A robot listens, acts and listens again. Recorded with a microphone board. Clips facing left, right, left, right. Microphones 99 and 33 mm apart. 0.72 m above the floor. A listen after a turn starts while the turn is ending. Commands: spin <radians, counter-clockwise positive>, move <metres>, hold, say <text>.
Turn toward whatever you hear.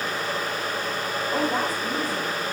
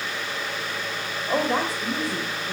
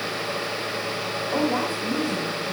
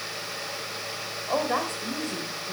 spin -1.22
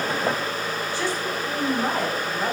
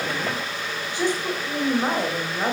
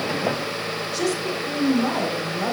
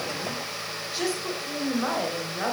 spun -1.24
spin -0.44
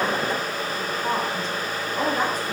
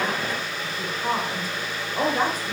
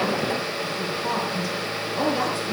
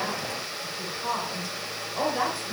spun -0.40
spin -0.26
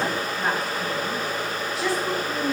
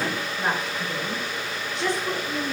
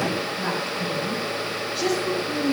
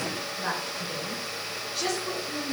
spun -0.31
say Found it: a woman speaking, straight ahead, 2 to 4 m away.